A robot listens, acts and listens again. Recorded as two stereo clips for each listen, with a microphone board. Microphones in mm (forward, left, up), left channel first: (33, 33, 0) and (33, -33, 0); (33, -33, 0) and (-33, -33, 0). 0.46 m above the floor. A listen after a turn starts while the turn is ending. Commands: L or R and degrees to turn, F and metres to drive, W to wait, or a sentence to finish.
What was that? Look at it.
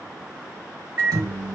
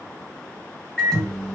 R75
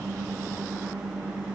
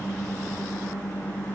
R30
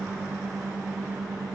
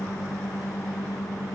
R10
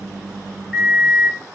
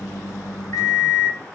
Facing the microwave.